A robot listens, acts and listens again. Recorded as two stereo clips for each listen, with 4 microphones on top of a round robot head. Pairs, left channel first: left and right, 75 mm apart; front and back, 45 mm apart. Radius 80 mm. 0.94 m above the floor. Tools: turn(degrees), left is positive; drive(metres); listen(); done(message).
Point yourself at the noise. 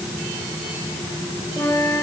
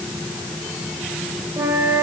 turn(degrees=150)
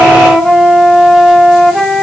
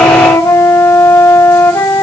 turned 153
done("Facing the flute.")